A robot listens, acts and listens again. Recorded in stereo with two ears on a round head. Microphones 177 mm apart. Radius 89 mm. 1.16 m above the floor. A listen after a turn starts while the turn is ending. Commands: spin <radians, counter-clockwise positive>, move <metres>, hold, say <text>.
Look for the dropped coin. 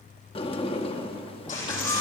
spin 0.70
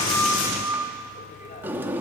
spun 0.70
hold
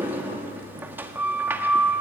say I heard a dropped coin, but can't make it out now. It was about straight ahead or 100° left.